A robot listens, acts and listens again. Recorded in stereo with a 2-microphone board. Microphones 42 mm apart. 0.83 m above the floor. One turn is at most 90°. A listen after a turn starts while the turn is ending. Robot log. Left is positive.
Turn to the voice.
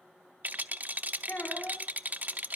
note: The child speaking: about 50° left or 130° left.
cmd yaw +50
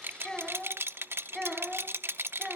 end: Facing the child speaking, over 4 m away.